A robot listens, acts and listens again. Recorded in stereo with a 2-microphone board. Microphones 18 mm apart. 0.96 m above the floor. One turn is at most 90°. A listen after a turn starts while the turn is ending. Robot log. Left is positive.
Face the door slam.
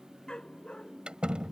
note: The door slam: about 65° right or 115° right.
cmd yaw -65
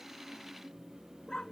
cmd idle
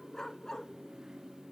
end: I heard a door slam, but can't make it out now. It was about straight ahead or 50° right.